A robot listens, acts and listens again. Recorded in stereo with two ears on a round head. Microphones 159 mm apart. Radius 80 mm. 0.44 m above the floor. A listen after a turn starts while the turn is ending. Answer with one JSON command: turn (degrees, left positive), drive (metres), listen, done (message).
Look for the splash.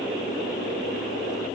{"listen": true}
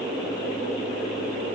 {"listen": true}
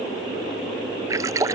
{"turn": -20}
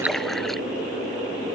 {"listen": true}
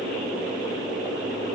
{"done": "I heard a splash, but can't make it out now. It was about straight ahead or 140° right."}